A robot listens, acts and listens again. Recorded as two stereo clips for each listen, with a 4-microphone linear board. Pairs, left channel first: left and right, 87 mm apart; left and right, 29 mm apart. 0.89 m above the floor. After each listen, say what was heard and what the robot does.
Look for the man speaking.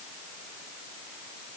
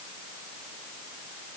Keep listening.
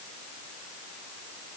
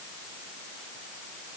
Keep listening.
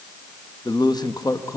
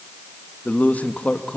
The man speaking: about 40° left or 140° left. Turn 40° left.
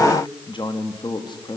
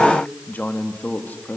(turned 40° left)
So it is at 125° left. Turn 125° left.
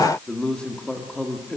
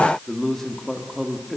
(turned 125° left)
The man speaking is now 10° left. Turn 10° left.
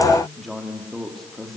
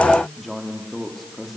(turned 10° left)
Found it: a man speaking, straight ahead, 2 to 4 m away.